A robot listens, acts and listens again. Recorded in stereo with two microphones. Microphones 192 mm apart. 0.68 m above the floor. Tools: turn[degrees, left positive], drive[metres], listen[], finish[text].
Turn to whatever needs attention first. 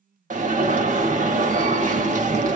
Thought: The alarm: about 40° right or 140° right.
Action: turn[-40]
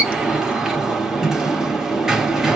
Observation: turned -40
Action: finish[Facing the alarm.]